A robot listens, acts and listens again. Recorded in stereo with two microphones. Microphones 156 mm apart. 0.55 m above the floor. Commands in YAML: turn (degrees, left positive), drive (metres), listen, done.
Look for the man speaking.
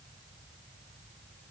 listen: true
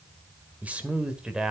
turn: -30
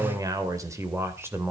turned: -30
turn: -30
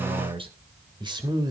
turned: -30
turn: -155
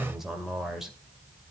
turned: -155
done: "Facing the man speaking, 2 to 4 m away."